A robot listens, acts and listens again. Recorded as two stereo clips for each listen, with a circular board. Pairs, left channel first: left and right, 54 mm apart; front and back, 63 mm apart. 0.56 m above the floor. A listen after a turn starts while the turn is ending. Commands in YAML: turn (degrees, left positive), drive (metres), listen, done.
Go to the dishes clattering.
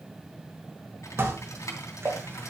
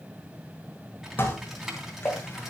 turn: -55
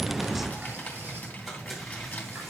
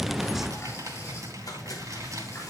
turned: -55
listen: true
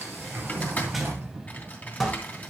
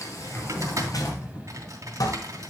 drive: 1.0
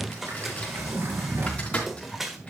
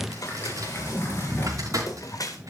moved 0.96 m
drive: 1.0
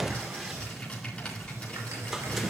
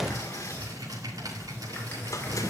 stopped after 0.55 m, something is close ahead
listen: true
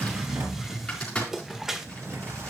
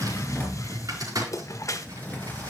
turn: -10
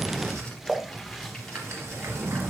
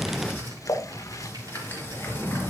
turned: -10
done: "Arrived at the dishes clattering, straight ahead."